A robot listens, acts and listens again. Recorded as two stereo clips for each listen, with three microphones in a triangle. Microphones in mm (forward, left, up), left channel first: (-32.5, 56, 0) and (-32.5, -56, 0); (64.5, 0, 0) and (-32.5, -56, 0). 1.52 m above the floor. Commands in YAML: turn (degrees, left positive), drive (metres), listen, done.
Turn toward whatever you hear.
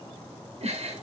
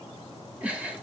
turn: -75
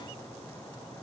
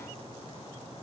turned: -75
listen: true
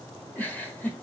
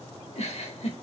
turn: 15
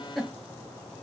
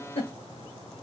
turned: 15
done: "Found it: a giggle, straight ahead."